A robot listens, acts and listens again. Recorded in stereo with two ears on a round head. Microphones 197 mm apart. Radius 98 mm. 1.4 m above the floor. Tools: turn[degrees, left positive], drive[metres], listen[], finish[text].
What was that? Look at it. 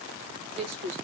Thought: The woman speaking: about 30° right or 150° right.
Action: turn[-30]
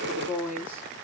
Thought: So it is at 10° right.
Action: turn[-10]
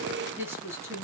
Thought: The woman speaking is now 15° right.
Action: turn[-15]
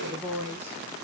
Thought: The woman speaking is now 10° right.
Action: turn[-10]
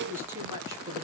Thought: The woman speaking is now 20° right.
Action: turn[-20]
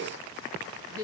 Thought: The woman speaking is now 15° right.
Action: turn[-15]
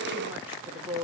Thought: The woman speaking is now 10° right.
Action: turn[-10]
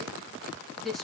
Action: finish[Facing the woman speaking, 2 to 4 m away.]